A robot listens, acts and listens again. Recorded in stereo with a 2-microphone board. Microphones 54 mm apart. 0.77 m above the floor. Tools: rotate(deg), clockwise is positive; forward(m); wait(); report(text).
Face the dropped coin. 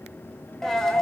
rotate(-30)
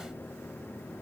wait()
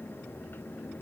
report("I heard a dropped coin, but can't make it out now. It was about 20° right or 140° left.")